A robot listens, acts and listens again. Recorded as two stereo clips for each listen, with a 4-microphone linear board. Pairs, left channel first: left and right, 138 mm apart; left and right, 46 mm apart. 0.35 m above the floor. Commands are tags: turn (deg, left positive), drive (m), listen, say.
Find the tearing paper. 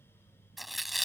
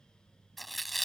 <turn deg="30"/>
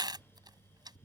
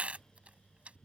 <turn deg="-35"/>
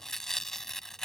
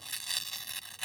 <say>Found it: tearing paper, straight ahead.</say>